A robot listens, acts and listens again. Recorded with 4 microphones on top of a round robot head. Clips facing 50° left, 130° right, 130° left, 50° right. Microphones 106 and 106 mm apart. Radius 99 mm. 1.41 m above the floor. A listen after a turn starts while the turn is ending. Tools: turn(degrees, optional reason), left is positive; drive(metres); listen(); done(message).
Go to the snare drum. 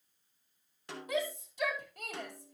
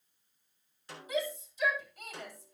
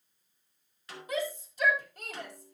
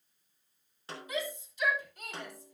turn(degrees=15, reason="The snare drum: 15° left.")
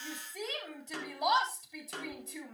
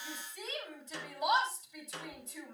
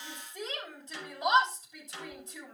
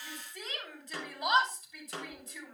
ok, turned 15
drive(metres=1.0)
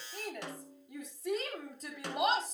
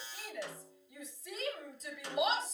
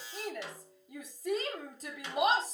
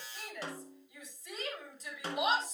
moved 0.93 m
turn(degrees=10, reason="The snare drum is now 10° left.")
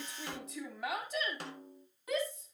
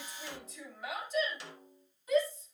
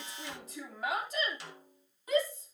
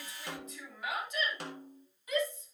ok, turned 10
drive(metres=1.0)
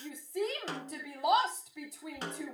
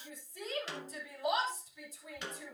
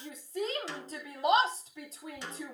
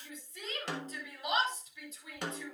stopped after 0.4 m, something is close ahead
done("Arrived at the snare drum, straight ahead.")